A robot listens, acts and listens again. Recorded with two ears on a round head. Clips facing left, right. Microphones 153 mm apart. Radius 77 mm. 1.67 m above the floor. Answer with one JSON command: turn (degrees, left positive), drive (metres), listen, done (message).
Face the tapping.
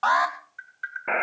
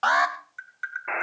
{"turn": -60}
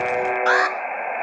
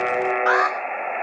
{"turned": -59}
{"listen": true}
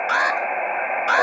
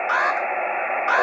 {"listen": true}
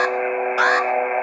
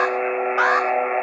{"done": "I heard tapping, but can't make it out now. It was about straight ahead or 60° right."}